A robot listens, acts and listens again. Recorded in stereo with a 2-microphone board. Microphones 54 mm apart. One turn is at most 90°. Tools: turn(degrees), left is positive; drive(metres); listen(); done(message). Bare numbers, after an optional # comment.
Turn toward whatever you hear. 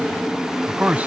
# The man speaking: about 30° right or 150° right.
turn(-30)
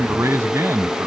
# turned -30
# So it is at 120° right.
turn(-90)
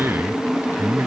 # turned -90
# The man speaking is now 50° right.
turn(-50)
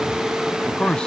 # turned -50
# The man speaking is now 20° left.
turn(20)
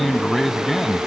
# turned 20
done("Facing the man speaking.")